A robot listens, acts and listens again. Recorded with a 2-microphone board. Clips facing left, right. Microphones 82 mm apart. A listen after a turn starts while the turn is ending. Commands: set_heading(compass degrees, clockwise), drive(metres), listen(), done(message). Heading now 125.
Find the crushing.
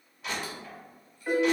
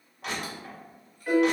set_heading(190)
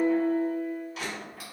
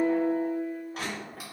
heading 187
set_heading(232)
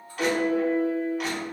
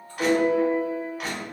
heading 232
done("Facing the crushing, 1 to 2 m away.")